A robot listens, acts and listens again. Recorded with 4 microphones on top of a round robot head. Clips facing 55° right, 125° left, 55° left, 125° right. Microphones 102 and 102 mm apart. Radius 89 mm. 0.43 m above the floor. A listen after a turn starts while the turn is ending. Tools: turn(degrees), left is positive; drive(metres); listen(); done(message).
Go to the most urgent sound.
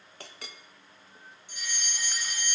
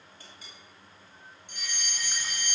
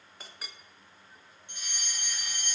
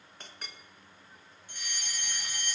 turn(degrees=120)
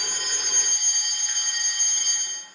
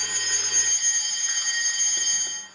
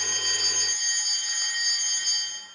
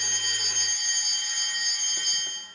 turn(degrees=-25)
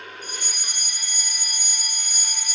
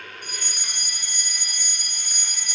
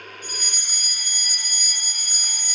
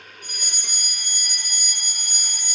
turn(degrees=20)
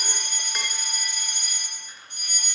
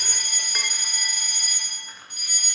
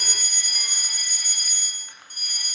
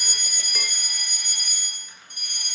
drive(metres=1.0)
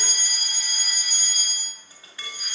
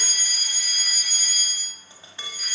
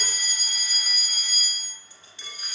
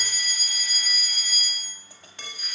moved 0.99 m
drive(metres=1.0)
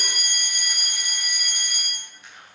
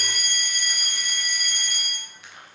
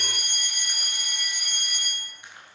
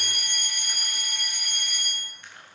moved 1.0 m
turn(degrees=10)
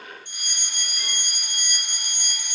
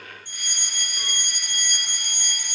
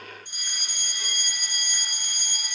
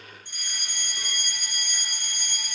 drive(metres=1.0)
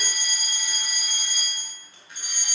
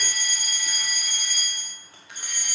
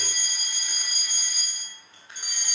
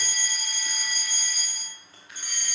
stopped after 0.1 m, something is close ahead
done("I am next to the fire alarm.")